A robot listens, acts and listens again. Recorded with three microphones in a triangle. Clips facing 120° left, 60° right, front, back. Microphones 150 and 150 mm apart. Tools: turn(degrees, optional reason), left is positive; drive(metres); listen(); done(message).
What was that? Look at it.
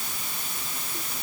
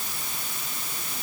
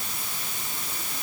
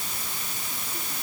listen()
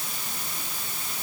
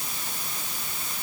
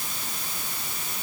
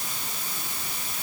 listen()
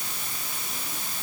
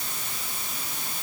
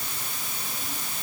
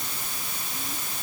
done("I can't make out anything to turn to.")